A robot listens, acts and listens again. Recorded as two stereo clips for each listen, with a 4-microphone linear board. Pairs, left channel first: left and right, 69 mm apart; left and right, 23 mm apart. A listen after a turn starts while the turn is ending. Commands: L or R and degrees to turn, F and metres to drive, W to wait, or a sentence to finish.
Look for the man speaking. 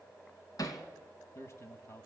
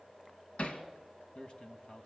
L40
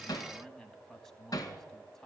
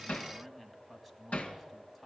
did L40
Found it: a man speaking, straight ahead.